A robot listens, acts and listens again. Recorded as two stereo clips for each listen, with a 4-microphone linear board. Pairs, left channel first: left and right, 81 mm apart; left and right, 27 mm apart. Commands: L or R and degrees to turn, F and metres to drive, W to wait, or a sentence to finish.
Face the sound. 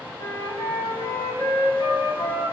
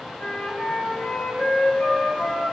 L90
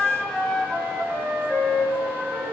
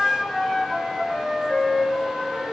Facing the flute, 2 to 4 m away.